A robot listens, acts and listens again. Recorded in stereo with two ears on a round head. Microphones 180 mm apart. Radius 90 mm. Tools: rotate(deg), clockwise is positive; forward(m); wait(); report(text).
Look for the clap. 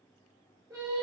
wait()
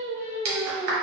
rotate(55)
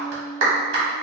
rotate(65)
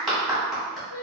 report("Facing the clap, 1 to 2 m away.")